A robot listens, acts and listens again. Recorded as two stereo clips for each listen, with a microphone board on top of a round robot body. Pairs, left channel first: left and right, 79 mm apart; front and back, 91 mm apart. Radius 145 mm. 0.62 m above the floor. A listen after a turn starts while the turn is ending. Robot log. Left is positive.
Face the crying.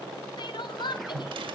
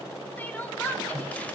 note: The crying: 70° left.
cmd yaw +70
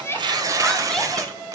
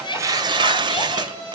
cmd idle
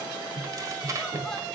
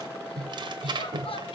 cmd idle
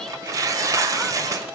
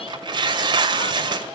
end: I heard crying from this way, but can't make it out now.